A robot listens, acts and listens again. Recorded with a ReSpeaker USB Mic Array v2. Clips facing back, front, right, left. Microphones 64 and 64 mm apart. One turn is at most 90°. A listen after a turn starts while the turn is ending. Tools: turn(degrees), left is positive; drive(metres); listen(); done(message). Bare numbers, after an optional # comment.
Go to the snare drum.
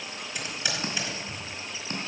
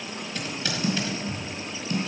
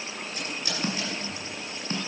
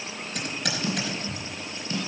# The snare drum: 130° right.
turn(-90)
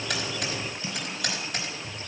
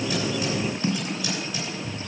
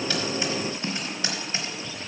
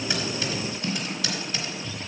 # The snare drum is now 25° right.
turn(-25)
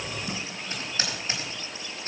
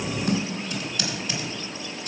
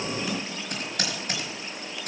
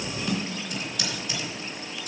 drive(1.0)
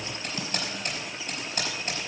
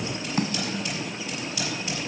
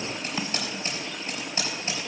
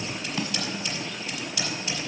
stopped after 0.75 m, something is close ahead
# The snare drum is now 10° right.
turn(-10)
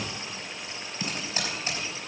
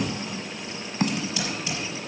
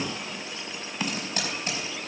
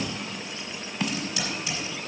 done("Arrived at the snare drum, straight ahead.")